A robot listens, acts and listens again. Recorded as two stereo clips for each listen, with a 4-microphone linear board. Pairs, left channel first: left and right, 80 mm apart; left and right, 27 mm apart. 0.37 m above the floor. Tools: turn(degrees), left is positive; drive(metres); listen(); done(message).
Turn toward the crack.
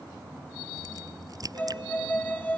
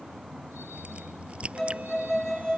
turn(degrees=-50)
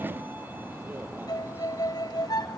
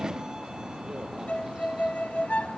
listen()
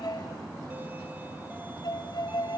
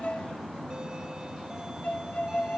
done("I heard a crack, but can't make it out now. It was about straight ahead or 80° right.")